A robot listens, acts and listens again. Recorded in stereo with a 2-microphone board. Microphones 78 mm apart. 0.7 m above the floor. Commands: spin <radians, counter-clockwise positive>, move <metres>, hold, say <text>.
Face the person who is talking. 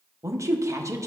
spin -0.79
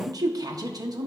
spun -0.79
spin -1.40
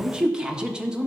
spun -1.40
spin -0.17
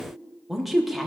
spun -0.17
say Found it: a woman speaking, straight ahead, under 1 m away.